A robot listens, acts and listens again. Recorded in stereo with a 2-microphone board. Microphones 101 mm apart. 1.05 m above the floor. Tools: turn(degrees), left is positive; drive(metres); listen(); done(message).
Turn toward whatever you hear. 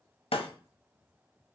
turn(degrees=75)
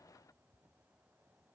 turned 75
listen()
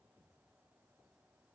done("I heard breaking glass, but can't make it out now. It was about straight ahead or 30° left.")